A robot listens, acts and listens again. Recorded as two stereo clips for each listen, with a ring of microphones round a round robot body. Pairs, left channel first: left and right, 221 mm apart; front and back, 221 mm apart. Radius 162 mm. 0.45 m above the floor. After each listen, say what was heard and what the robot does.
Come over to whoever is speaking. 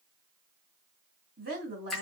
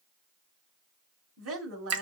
The woman speaking: 145° right. Turn 145° right.
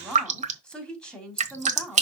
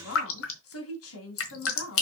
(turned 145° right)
Drive 1.0 m forward.
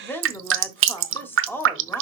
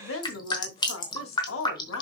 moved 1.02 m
The woman speaking is now 10° left. Turn 10° left.
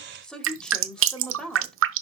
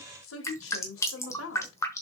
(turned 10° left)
Drive 1.0 m forward.
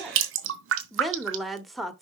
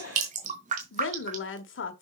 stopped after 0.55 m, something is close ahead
Arrived at the woman speaking, straight ahead.